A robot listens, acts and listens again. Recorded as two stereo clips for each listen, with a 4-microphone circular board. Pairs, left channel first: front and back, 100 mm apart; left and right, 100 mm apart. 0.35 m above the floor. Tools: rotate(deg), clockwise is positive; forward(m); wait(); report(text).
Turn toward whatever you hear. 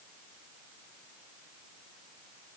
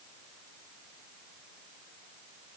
wait()
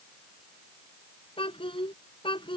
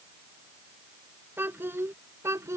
rotate(30)
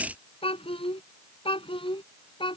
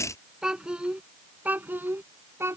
rotate(25)
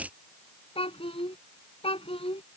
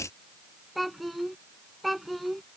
report("Found it: a child speaking, straight ahead.")